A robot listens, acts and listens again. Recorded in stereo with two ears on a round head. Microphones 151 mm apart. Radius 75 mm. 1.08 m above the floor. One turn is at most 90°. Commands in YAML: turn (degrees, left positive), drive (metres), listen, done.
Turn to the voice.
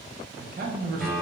turn: -55
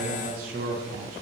turn: -60
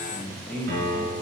done: "Facing the man speaking."